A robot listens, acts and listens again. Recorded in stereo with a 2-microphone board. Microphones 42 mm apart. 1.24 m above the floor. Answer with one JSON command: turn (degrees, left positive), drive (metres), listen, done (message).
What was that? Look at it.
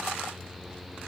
{"listen": true}
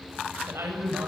{"turn": -90}
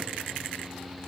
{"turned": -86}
{"listen": true}
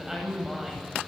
{"turn": -10}
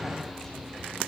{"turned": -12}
{"listen": true}
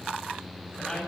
{"done": "Found it: a woman speaking, straight ahead, over 4 m away."}